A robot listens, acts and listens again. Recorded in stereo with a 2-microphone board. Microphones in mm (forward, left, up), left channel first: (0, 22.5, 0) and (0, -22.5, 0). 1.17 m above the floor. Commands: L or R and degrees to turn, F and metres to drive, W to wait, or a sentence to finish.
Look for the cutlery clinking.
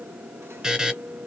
W
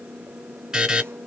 W
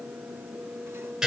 I can't make out cutlery clinking, only a buzzer.